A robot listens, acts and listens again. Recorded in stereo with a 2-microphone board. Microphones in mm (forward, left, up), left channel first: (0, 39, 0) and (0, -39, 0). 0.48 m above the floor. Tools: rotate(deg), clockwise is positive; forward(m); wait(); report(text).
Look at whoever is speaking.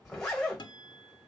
wait()
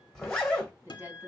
rotate(25)
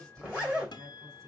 rotate(130)
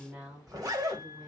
rotate(20)
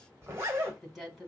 report("Facing the woman speaking.")